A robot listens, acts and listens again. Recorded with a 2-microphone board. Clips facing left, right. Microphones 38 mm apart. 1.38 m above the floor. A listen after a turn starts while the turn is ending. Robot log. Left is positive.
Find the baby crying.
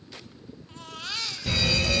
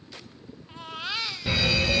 note: The baby crying: about 15° right or 165° right.
cmd yaw -15
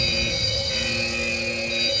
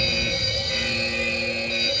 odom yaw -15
cmd idle
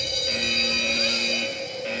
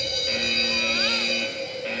cmd idle
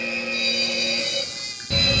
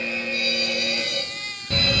note: So it is at 150° right.
cmd yaw -150
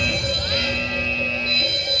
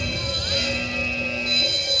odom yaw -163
note: Nothing new. It was at 15° left.
cmd yaw +15
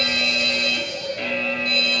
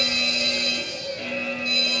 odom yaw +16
cmd idle
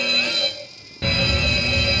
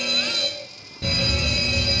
end: I heard a baby crying from this way, but can't make it out now.